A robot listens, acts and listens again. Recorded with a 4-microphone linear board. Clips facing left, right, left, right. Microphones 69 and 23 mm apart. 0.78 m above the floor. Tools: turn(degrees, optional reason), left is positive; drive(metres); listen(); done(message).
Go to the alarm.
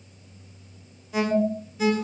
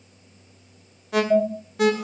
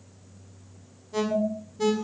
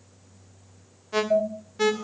turn(degrees=-75, reason="The alarm: about 75° right or 105° right.")
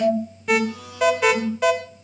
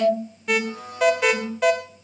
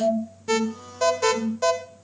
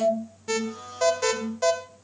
drive(metres=1.0)
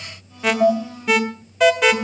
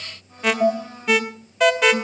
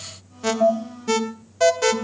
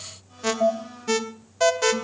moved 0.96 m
drive(metres=1.0)
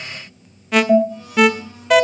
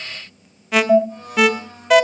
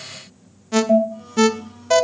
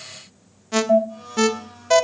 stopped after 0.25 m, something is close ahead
done("I am next to the alarm.")